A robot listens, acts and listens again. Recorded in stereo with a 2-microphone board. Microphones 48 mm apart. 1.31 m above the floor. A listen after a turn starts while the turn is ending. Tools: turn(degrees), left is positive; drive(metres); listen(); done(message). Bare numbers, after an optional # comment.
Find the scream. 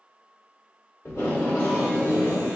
listen()
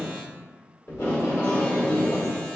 listen()
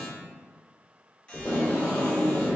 done("I can't make out a scream, only tape being pulled.")